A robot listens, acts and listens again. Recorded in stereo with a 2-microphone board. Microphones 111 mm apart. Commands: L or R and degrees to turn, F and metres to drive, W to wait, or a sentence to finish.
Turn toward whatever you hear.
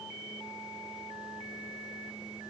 W
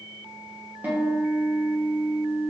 R15
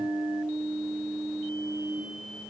Facing the guitar.